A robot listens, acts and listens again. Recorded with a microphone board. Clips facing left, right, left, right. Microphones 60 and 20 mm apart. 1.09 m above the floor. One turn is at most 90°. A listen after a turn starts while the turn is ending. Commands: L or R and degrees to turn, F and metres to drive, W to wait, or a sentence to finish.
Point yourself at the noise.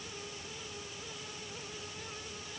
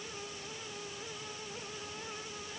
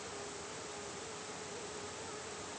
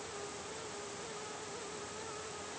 W
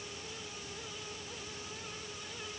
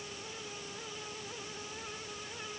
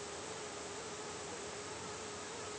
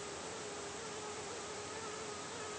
W
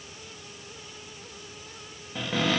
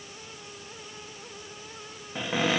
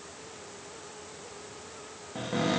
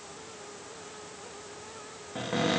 R15
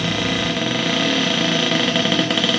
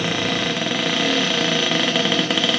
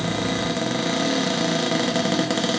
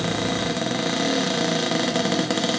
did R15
Facing the cupboard door, under 1 m away.